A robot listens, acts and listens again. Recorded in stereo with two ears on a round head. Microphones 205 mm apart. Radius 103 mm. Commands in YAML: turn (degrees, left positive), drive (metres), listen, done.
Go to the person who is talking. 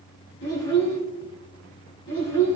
turn: 55
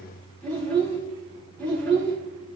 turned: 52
drive: 1.0
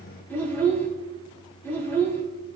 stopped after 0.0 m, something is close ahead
turn: 10
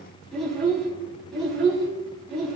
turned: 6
done: "Blocked. The child speaking is further on, straight ahead."